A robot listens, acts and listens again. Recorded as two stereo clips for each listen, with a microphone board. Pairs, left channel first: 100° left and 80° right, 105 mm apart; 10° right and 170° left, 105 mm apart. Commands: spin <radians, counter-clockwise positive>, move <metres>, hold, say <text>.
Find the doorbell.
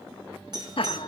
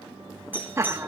spin -2.09
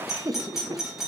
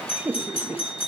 say Facing the doorbell.